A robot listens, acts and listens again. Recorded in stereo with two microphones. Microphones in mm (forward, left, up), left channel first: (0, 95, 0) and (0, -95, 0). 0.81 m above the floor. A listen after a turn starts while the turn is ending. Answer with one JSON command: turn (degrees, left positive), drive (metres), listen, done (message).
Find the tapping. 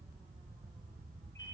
{"listen": true}
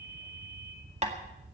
{"turn": -35}
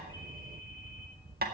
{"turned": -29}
{"turn": -110}
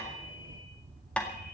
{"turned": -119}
{"done": "Found it: tapping, straight ahead."}